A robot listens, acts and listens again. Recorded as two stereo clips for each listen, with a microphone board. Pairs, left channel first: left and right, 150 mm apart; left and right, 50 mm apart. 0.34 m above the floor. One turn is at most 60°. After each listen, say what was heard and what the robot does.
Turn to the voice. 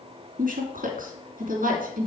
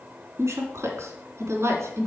The woman speaking: about 70° right or 110° right. Turn 60° right.
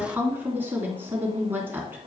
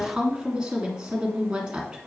So it is at 15° right. Turn 15° right.
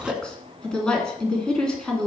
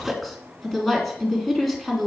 Found it: a woman speaking, straight ahead, 2 to 4 m away.